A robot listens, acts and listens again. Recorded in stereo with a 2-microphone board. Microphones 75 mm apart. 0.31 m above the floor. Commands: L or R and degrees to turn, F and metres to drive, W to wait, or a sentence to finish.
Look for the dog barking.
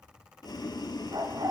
R60
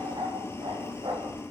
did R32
R85
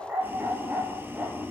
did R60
R25
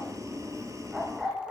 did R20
R10
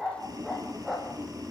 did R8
Found it: a dog barking, straight ahead.